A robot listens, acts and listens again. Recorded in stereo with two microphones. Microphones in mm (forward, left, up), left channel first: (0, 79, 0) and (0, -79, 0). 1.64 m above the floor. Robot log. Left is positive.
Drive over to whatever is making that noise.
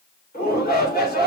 cmd yaw +90
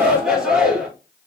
cmd fwd 1.0
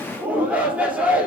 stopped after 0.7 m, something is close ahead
note: The shout is now 10° right.
cmd yaw -10
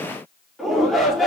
end: Something is in my way. I am facing the shout but have not reached it.